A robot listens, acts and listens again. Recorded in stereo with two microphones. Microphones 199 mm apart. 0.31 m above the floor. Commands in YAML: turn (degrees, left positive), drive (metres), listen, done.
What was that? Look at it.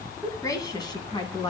turn: 25
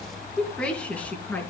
turn: 30
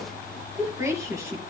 turn: -15
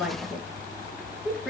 done: "Found it: a woman speaking, straight ahead, over 4 m away."